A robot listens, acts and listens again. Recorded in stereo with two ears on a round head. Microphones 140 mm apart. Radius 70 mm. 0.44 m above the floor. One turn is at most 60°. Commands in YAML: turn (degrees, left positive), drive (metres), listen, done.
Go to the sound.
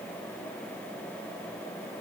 listen: true
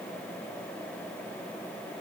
listen: true
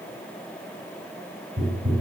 turn: -20
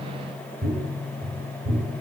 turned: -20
turn: -60
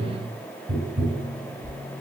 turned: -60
turn: -60
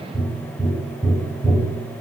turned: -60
turn: -15
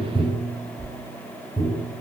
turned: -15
drive: 1.0
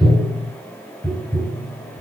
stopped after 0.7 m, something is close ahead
done: "Arrived at the tapping, straight ahead."